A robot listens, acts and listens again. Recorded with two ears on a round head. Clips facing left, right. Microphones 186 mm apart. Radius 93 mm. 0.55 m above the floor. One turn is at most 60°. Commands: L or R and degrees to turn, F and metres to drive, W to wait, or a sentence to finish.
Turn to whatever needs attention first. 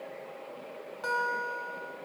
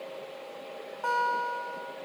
W
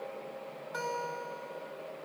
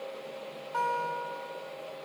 W
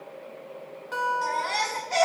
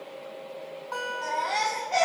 L55
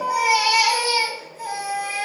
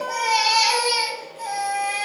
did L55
Facing the baby crying, 2 to 4 m away.